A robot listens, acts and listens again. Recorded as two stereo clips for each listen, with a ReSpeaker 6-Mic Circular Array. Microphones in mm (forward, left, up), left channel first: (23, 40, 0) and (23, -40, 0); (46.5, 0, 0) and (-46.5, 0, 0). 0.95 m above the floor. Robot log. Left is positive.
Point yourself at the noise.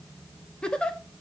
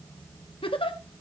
note: The giggle: 10° left.
cmd yaw +10
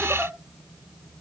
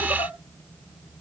cmd idle
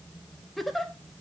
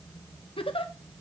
end: Facing the giggle.